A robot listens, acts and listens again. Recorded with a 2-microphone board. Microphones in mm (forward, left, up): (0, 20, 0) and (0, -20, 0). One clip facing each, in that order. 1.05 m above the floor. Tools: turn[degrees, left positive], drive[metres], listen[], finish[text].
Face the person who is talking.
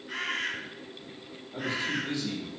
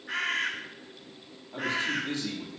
Thought: The man speaking: about 50° right or 130° right.
Action: turn[-50]
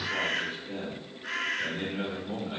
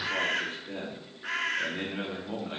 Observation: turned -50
Thought: So it is at 85° right.
Action: turn[-85]
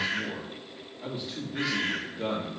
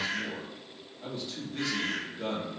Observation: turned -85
Thought: The man speaking is now 15° left.
Action: turn[15]
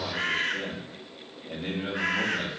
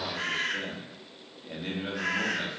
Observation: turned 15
Action: finish[Facing the man speaking.]